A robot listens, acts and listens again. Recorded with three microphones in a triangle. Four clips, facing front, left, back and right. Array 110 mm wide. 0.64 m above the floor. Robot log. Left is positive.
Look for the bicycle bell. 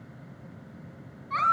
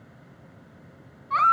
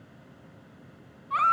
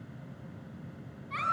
cmd idle
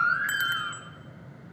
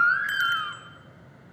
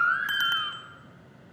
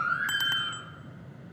note: The bicycle bell: 115° right.
cmd yaw -115
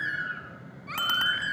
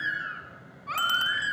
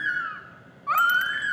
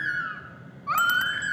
note: The bicycle bell is now 10° right.
cmd yaw -10
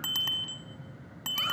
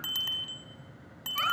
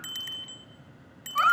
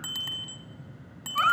end: Facing the bicycle bell.